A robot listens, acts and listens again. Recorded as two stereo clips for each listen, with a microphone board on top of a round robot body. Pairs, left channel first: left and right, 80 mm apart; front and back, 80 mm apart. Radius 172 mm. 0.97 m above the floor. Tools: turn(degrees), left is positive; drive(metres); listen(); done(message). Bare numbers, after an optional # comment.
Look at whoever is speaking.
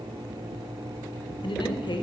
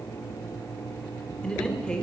# The man speaking: 80° left.
turn(80)
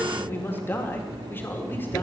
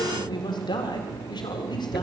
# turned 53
# The man speaking is now 25° left.
turn(25)
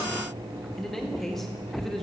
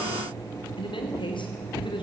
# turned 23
done("Facing the man speaking.")